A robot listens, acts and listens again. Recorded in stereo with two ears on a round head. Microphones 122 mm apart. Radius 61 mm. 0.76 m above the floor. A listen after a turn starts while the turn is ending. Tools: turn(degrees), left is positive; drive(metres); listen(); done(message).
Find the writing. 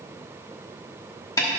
listen()
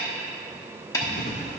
turn(degrees=60)
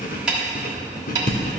turn(degrees=65)
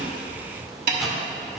done("Found it: writing, straight ahead.")